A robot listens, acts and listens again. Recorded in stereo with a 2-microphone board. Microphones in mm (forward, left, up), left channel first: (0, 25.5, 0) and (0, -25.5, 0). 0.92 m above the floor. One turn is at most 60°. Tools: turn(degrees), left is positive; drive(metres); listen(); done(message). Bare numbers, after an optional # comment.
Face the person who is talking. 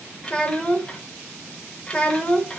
# The child speaking: about 25° left or 155° left.
turn(25)
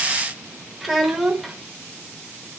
done("Facing the child speaking.")